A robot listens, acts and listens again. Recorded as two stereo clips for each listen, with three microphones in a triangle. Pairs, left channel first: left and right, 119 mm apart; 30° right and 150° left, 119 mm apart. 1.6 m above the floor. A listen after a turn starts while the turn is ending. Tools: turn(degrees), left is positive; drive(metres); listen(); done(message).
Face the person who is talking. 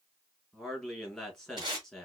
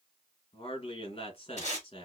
done("Facing the man speaking.")